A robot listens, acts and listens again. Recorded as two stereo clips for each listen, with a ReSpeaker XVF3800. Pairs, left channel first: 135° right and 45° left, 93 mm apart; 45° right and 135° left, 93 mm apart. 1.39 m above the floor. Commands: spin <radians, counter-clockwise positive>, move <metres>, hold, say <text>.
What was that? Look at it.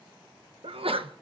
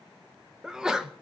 spin 0.87
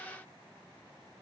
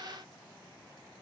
say I heard a sneeze from this way, but can't make it out now.